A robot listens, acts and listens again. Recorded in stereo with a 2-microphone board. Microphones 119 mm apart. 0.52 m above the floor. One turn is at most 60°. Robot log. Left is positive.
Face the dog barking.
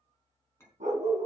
cmd yaw -60
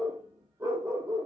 note: So it is at 25° right.
cmd yaw -25
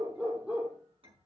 note: The dog barking is now 10° right.
cmd yaw -10
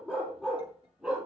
end: Facing the dog barking.